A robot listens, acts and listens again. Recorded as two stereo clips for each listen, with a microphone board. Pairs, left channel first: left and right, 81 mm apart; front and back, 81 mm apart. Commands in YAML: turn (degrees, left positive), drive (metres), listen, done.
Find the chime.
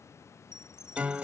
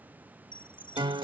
turn: -10
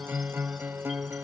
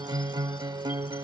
listen: true
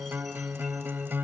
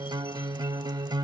listen: true
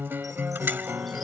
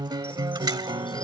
done: "I heard a chime from this way, but can't make it out now."